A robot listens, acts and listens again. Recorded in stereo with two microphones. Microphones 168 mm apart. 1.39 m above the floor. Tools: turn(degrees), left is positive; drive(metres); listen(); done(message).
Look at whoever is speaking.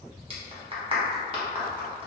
listen()
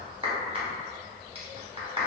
listen()
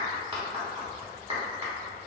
done("I can't make out anyone speaking, only a clap.")